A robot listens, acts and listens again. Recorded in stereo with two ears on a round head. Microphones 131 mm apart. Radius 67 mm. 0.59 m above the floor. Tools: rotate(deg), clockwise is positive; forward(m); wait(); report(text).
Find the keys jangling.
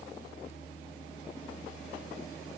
wait()
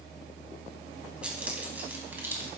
rotate(15)
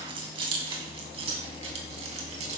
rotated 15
rotate(130)
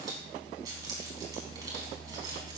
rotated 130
rotate(25)
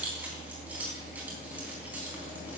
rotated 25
rotate(10)
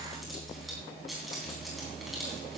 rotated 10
report("Facing the keys jangling.")